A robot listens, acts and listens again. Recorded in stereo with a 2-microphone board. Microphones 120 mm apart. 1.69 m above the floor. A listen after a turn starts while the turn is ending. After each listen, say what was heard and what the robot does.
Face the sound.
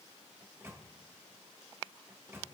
The microwave: about 20° right or 160° right. Turn 20° right.
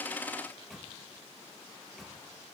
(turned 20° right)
Facing the microwave.